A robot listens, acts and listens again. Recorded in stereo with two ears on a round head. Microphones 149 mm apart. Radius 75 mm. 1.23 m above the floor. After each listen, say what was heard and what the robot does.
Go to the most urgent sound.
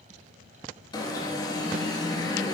The alarm: about 25° left or 155° left. Turn 25° left.
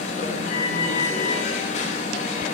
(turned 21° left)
So it is at 135° left. Turn 135° left.
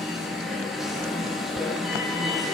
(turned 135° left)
Drive 1.0 m forward.
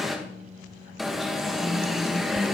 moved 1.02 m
Drive 1.0 m forward.
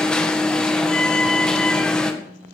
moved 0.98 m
Drive 1.0 m forward.
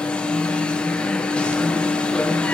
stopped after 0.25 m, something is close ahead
The alarm is now 10° left. Turn 10° left.
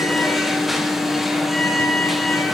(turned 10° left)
I am next to the alarm.